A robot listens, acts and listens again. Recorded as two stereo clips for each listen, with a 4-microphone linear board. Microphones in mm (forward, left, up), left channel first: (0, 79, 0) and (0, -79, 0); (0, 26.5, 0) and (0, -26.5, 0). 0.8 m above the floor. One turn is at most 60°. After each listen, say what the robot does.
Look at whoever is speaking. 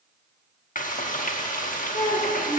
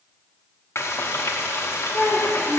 Turn 45° left.
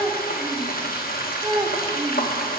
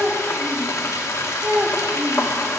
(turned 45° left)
Turn 20° right.
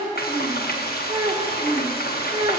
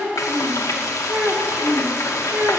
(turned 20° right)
Turn 30° right.
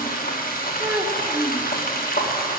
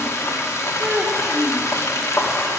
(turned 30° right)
Turn 15° right.
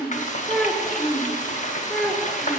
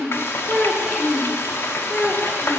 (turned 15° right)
Found it: a child speaking, straight ahead, 1 to 2 m away.